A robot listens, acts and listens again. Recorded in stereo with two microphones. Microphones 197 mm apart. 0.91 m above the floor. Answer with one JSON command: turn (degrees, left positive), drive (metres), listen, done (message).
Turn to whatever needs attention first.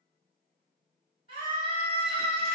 {"turn": 55}
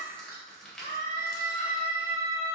{"turn": 65}
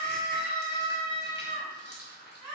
{"done": "Facing the scream, 2 to 4 m away."}